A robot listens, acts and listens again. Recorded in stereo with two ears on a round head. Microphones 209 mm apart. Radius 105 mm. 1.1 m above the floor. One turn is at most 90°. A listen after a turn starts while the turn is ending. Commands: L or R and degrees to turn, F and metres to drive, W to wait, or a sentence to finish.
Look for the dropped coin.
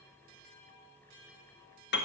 W
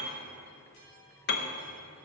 W
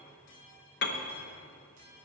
I can't make out a dropped coin to turn to.